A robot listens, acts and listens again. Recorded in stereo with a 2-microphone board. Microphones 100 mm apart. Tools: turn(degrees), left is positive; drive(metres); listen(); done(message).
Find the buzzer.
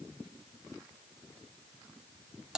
listen()
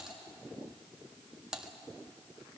listen()
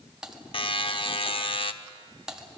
turn(degrees=60)
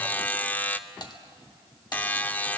turn(degrees=20)
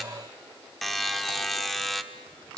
done("Facing the buzzer, under 1 m away.")